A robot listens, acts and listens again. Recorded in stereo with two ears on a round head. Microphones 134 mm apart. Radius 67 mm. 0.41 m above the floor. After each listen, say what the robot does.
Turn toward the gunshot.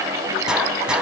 Turn 30° right.
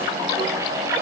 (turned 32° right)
Keep listening.
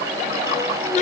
I heard a gunshot, but can't make it out now. It was about 25° left or 145° right.